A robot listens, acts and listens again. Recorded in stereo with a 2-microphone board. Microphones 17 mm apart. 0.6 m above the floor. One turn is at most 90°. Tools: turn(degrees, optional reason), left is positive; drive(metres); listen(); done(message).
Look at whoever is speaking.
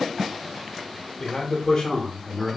turn(degrees=50, reason="The man speaking: about 50° left or 130° left.")
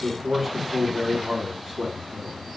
turn(degrees=-30, reason="So it is at 30° right.")
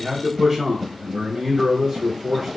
turn(degrees=-25, reason="The man speaking is now 25° right.")
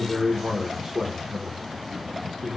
done("Found it: a man speaking, straight ahead, 1 to 2 m away.")